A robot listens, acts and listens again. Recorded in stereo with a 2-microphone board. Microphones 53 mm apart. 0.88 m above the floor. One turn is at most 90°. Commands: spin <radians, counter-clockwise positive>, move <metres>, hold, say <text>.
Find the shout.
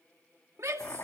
spin -1.13
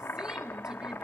hold
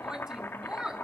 spin -0.26
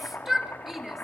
say Facing the shout.